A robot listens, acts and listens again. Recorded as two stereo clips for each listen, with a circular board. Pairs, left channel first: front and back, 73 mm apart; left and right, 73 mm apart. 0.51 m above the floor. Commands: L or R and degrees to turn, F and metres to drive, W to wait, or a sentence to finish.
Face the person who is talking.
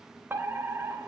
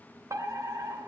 W
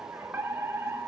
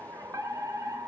W
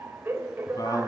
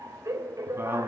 R30
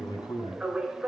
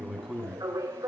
Found it: a man speaking, straight ahead.